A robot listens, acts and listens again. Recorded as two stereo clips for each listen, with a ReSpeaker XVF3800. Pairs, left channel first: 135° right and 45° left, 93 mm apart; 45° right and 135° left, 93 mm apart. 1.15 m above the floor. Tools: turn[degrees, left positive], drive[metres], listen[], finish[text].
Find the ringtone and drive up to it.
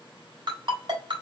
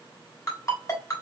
Thought: The ringtone: 10° left.
Action: turn[10]
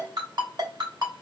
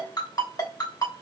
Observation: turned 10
Action: drive[1.0]
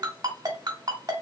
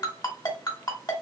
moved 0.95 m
Action: drive[1.0]
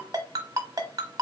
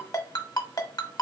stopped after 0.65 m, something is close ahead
Action: finish[I am next to the ringtone.]